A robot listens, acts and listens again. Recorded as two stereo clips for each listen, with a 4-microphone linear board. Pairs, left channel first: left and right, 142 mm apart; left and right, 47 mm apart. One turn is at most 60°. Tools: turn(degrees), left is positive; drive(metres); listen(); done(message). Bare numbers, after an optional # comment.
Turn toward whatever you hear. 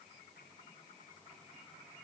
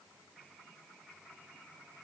listen()
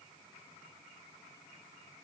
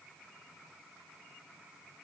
listen()
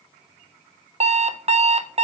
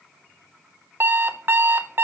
# The alarm clock: about 45° right or 135° right.
turn(-45)
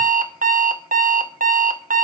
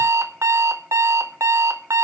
# So it is at 85° right.
turn(-60)
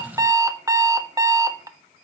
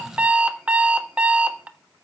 # The alarm clock is now 25° right.
turn(-25)
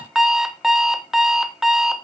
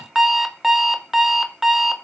done("Facing the alarm clock.")